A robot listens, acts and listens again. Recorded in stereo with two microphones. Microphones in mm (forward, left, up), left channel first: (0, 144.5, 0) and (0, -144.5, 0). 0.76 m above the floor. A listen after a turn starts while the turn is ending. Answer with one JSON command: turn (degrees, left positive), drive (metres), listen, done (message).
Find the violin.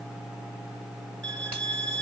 {"turn": -40}
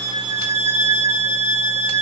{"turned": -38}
{"turn": -10}
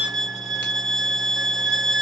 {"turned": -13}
{"done": "Facing the violin, 1 to 2 m away."}